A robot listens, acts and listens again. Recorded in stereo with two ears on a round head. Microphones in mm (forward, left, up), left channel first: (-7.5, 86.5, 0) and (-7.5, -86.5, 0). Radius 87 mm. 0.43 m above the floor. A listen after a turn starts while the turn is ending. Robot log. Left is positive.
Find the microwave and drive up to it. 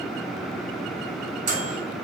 note: The microwave: about 40° right or 140° right.
cmd yaw -40
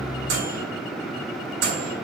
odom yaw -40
note: So it is at 100° right.
cmd yaw -100
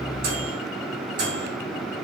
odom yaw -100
note: The microwave is now 25° right.
cmd yaw -25
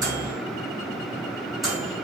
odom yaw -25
cmd fwd 1.0
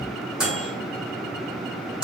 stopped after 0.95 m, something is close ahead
end: Arrived at the microwave, straight ahead.